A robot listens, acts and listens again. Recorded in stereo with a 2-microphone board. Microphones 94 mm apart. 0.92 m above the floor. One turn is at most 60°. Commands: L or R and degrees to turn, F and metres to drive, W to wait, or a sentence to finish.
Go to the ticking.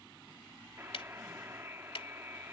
L60
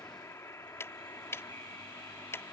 L30
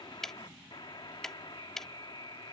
F1.0
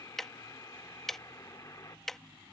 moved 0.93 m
F1.0
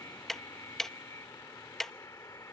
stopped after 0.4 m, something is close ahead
Arrived at the ticking, straight ahead.